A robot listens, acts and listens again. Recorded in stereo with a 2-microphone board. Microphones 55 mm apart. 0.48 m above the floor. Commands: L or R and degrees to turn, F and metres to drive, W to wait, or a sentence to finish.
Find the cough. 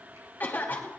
L35
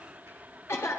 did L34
L105
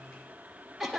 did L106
Found it: a cough, straight ahead.